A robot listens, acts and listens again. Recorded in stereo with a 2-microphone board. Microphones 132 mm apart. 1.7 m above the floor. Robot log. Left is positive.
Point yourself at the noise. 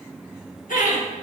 cmd yaw +90
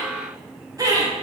note: So it is at 30° right.
cmd yaw -30
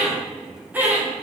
note: The laughter is now 15° right.
cmd yaw -15
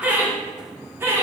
note: The laughter is now 20° right.
cmd yaw -20
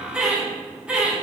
note: The laughter is now 10° right.
cmd yaw -10
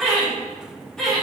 end: Facing the laughter, 2 to 4 m away.